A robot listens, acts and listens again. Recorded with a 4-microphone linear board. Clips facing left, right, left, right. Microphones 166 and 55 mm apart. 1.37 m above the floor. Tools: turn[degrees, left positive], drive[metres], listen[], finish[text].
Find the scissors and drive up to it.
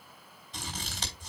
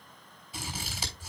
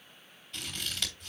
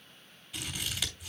Action: turn[-30]
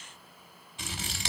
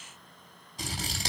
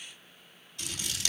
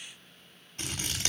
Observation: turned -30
Thought: So it is at 140° right.
Action: turn[-140]
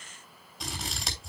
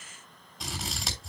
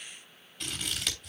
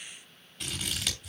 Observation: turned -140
Action: drive[1.0]
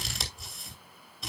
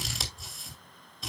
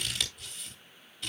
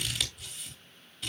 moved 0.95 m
Action: drive[1.0]
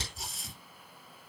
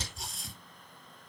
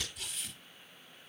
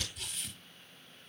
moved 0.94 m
Action: drive[1.0]
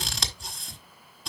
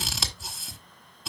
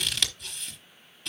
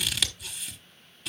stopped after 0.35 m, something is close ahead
Action: finish[Arrived at the scissors, straight ahead.]